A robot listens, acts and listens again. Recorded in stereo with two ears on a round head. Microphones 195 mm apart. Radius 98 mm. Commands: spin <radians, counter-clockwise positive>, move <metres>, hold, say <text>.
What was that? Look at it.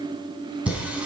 spin -0.52
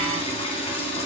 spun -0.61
spin 0.44
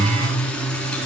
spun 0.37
say Found it: singing, straight ahead.